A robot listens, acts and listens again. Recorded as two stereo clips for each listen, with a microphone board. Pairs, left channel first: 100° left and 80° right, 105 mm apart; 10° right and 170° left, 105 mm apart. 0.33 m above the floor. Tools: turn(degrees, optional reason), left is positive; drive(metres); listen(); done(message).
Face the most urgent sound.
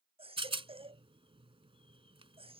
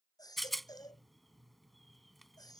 turn(degrees=-60, reason="The baby crying: 60° right.")
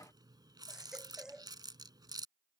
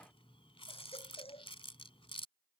done("Found it: a baby crying, straight ahead.")